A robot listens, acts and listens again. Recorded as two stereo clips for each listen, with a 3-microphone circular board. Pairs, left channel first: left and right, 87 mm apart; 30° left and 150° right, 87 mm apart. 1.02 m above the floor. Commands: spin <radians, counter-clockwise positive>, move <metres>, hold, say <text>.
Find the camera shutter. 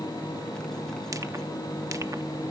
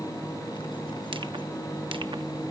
hold
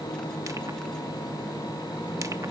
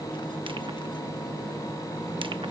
hold
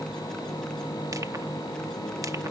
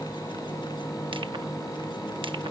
say I can't make out a camera shutter to turn to.